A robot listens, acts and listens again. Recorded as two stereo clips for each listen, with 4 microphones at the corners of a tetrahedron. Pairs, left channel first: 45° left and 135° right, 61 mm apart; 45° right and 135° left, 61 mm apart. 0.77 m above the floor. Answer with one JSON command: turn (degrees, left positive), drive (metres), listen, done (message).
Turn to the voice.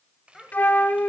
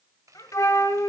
{"turn": -45}
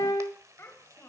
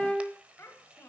{"done": "Facing the child speaking."}